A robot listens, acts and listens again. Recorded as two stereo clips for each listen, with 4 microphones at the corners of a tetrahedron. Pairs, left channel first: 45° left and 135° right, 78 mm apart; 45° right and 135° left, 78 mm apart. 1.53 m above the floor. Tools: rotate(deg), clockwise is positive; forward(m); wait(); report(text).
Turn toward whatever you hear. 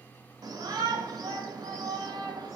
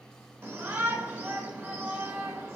rotate(165)
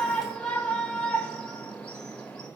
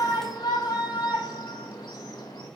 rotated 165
rotate(35)
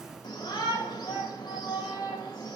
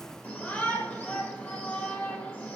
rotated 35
rotate(-25)
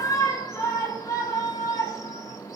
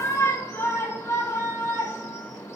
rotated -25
report("Found it: a shout, straight ahead.")